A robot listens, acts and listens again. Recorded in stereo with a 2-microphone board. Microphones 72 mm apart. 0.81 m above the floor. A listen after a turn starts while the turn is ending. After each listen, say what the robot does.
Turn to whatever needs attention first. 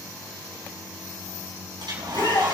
Turn 70° left.
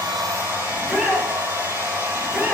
Found it: a shout, straight ahead.